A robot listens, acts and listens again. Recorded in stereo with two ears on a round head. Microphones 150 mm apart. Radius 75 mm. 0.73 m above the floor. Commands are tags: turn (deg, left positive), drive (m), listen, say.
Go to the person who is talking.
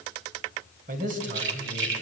<turn deg="-55"/>
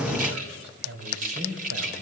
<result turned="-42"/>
<turn deg="-85"/>
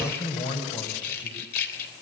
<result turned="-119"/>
<turn deg="35"/>
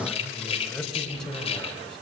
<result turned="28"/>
<drive m="1.0"/>
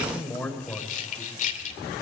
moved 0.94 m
<turn deg="10"/>
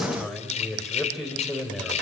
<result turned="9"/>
<drive m="1.0"/>
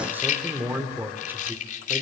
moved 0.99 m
<turn deg="-10"/>
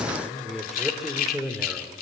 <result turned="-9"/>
<drive m="1.0"/>
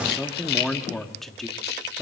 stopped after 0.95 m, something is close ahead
<say>Arrived at the man speaking, straight ahead.</say>